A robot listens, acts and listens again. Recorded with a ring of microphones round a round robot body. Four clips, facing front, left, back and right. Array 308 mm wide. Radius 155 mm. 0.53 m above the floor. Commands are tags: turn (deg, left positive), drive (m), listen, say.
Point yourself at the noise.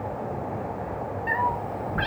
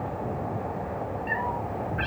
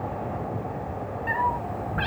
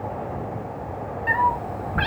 <turn deg="-85"/>
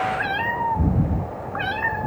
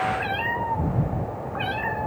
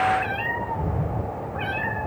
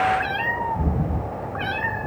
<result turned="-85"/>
<say>Found it: a cat meowing, straight ahead, 2 to 4 m away.</say>